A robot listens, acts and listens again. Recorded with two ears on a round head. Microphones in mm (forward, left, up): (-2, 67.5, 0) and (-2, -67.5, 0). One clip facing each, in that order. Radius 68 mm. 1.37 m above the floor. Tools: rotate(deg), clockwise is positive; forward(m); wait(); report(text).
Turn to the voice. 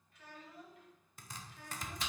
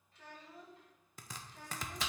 rotate(35)
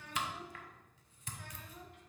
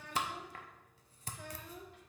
rotate(110)
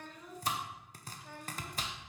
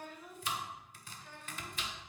rotate(-15)
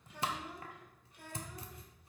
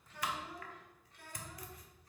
rotate(-15)
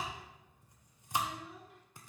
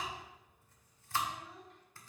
report("Facing the child speaking, 1 to 2 m away.")